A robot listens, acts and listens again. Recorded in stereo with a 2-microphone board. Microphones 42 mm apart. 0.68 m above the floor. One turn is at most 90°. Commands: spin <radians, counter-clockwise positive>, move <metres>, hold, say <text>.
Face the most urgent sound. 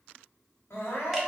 spin 1.13
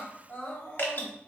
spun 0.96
spin 1.05
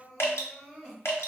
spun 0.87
say Facing the crying, 1 to 2 m away.